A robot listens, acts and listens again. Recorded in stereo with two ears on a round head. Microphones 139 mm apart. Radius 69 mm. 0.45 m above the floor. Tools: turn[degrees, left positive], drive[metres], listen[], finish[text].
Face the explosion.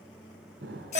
Action: turn[-90]
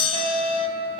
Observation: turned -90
Action: finish[I heard an explosion from this way, but can't make it out now.]